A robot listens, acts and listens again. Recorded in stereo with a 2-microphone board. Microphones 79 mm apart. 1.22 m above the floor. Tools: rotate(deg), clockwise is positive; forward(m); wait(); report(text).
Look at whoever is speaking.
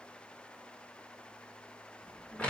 rotate(-30)
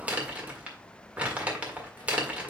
rotate(-100)
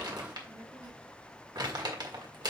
rotate(60)
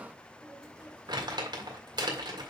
rotate(20)
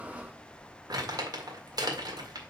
report("Facing the child speaking.")